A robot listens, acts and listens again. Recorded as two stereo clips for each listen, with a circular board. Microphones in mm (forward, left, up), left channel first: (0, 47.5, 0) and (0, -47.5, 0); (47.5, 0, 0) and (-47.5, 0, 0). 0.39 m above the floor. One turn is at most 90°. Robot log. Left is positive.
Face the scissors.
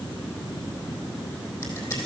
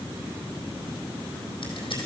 note: The scissors: 30° left.
cmd yaw +30
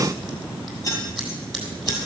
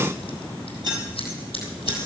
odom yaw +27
end: Found it: scissors, straight ahead, 2 to 4 m away.